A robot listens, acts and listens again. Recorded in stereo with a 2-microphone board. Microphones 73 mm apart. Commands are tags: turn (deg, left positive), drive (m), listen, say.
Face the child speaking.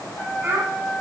<turn deg="-30"/>
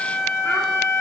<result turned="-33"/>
<listen/>
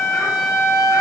<listen/>
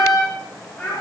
<turn deg="20"/>
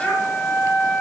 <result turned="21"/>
<listen/>
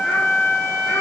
<listen/>
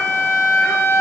<say>Facing where the child speaking came from. I can't hear it now.</say>